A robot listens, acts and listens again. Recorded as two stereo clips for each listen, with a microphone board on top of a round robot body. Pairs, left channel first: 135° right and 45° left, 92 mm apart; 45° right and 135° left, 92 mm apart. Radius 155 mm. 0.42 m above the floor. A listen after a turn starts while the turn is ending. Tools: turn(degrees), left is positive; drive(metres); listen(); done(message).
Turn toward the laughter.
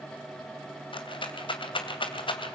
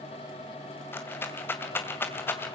listen()
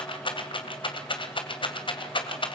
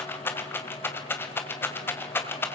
listen()
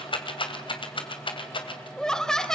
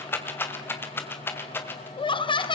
turn(degrees=-55)
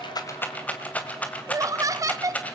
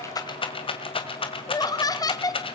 done("Facing the laughter, 1 to 2 m away.")